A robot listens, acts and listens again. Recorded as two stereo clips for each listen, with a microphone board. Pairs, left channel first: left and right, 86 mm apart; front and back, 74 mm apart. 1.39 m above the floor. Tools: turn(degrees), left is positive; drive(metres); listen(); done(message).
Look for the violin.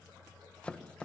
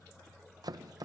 listen()
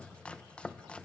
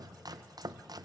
listen()
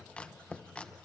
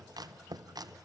done("I can't make out a violin, only chopping.")